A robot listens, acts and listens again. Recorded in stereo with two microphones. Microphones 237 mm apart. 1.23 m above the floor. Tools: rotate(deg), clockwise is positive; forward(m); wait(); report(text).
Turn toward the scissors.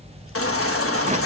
wait()
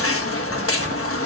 wait()
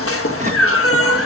report("I can't make out scissors to turn to.")